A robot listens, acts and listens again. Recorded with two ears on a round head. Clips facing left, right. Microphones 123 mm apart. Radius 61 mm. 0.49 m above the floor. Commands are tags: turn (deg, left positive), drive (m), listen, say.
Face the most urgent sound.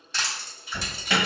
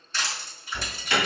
<turn deg="65"/>
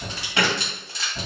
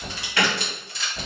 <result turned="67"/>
<turn deg="20"/>
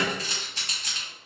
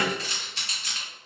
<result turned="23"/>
<listen/>
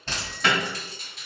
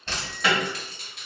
<say>Found it: an alarm, straight ahead, 1 to 2 m away.</say>